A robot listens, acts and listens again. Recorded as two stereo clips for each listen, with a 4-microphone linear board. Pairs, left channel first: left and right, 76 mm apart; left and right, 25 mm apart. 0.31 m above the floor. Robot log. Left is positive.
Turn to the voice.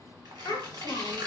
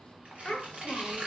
note: The child speaking: about 55° left or 125° left.
cmd yaw +55
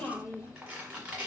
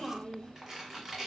note: So it is at 25° left.
cmd yaw +25
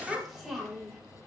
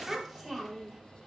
end: Facing the child speaking.